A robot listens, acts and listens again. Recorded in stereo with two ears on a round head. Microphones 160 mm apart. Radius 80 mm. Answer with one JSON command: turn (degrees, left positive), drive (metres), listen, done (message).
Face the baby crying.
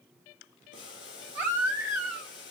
{"turn": -30}
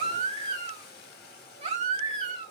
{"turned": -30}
{"turn": -135}
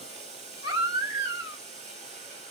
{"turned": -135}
{"turn": -30}
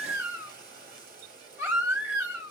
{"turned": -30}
{"turn": -15}
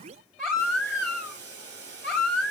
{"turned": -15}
{"done": "Found it: a baby crying, straight ahead."}